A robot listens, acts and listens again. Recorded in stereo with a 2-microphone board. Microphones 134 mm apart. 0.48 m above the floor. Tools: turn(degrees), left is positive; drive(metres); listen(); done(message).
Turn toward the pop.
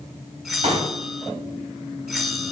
turn(degrees=-45)
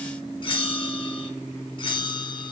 listen()
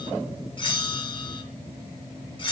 done("I heard a pop, but can't make it out now. It was about straight ahead or 90° right.")